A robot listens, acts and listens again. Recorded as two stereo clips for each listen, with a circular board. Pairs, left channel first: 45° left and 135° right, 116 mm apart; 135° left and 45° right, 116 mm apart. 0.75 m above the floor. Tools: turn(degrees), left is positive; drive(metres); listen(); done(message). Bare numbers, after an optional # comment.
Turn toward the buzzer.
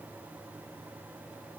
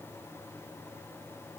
listen()
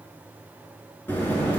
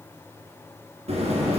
# The buzzer: 30° right.
turn(-30)
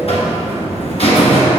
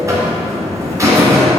# The buzzer is now 15° left.
turn(15)
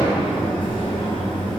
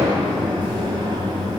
done("Facing the buzzer, 2 to 4 m away.")